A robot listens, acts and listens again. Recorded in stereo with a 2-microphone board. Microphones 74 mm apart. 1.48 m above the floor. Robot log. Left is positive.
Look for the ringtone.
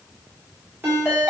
note: The ringtone: about 30° right or 150° right.
cmd yaw -30
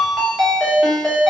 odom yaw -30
end: Found it: a ringtone, straight ahead.